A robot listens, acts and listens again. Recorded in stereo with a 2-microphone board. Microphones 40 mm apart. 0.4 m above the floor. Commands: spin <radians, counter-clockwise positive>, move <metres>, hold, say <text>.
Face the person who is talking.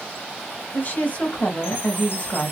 spin 0.70
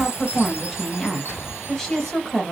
spin 0.17
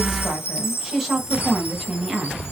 say Found it: a woman speaking, straight ahead.